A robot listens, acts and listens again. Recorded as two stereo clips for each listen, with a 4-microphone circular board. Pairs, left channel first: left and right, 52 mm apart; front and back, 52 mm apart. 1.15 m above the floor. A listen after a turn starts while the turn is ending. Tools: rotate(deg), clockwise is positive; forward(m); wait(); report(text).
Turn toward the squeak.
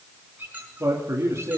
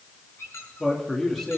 rotate(30)
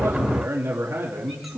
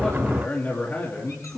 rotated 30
wait()
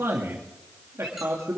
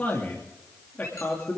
wait()
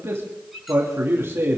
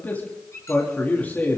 report("Facing the squeak, over 4 m away.")